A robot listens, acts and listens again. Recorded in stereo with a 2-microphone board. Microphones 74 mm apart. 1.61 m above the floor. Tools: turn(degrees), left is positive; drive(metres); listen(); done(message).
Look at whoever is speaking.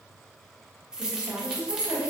turn(degrees=-50)
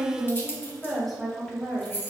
done("Found it: a woman speaking, straight ahead, 1 to 2 m away.")